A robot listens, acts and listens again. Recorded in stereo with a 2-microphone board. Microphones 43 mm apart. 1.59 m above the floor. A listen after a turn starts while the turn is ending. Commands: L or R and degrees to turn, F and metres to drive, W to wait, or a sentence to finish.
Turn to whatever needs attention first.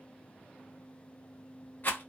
W
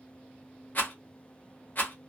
W
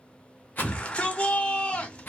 L25
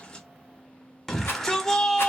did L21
Found it: a shout, straight ahead, 1 to 2 m away.